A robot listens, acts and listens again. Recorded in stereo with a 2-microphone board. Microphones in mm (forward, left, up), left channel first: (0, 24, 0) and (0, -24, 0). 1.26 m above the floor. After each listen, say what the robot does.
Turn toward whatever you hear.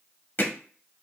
Turn 45° left.
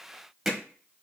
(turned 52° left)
Found it: hammering, straight ahead, under 1 m away.